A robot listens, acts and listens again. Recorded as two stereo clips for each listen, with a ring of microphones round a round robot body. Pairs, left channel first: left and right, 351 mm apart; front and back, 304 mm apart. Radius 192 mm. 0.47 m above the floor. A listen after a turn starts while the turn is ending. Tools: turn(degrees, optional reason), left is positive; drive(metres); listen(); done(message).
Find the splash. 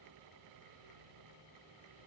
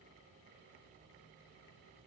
listen()
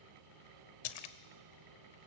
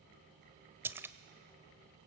turn(degrees=95, reason="The splash: 95° left.")
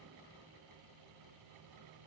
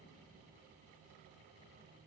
done("I heard a splash from this way, but can't make it out now.")